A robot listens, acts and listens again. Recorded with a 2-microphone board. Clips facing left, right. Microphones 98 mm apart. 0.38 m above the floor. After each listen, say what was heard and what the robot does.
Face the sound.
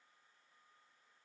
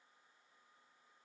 Keep listening.
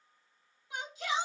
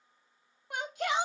The shout: about 60° right or 120° right. Turn 60° right.
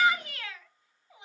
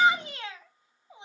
So it is at 30° right. Turn 30° right.
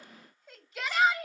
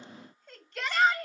Found it: a shout, straight ahead, 1 to 2 m away.